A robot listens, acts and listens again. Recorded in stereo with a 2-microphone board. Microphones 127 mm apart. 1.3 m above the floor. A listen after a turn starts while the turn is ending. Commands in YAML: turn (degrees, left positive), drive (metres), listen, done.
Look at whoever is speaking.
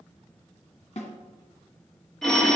listen: true
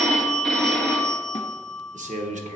turn: -65
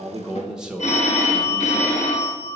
done: "Facing the man speaking, under 1 m away."